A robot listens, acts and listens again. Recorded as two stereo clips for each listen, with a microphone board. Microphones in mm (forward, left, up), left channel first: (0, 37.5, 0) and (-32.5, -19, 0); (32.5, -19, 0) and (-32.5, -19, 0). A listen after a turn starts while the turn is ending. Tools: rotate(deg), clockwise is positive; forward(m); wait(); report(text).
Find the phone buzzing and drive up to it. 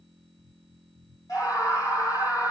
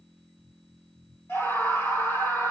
wait()
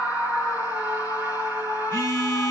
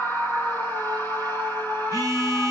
rotate(-10)
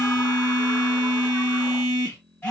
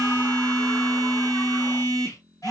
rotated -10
forward(1.0)
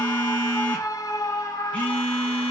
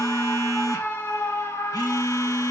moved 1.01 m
rotate(10)
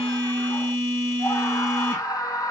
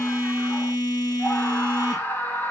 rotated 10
forward(1.0)
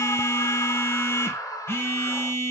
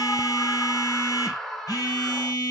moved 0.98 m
rotate(-10)
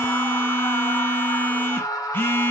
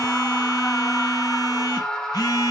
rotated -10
forward(1.0)
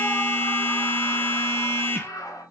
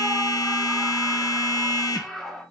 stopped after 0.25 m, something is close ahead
report("I am next to the phone buzzing.")